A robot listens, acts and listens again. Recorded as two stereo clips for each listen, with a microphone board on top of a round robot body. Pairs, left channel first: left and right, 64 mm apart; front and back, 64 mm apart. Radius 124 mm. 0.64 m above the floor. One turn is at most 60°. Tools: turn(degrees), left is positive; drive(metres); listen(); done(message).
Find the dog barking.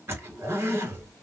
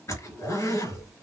listen()
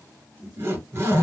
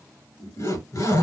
listen()
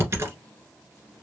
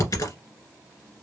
done("I can't make out a dog barking to turn to.")